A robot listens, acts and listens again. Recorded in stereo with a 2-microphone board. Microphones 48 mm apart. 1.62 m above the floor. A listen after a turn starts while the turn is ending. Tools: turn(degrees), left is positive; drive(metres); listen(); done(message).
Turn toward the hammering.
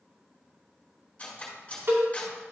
listen()
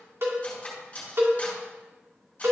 listen()
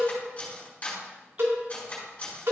done("I can't make out hammering to turn to.")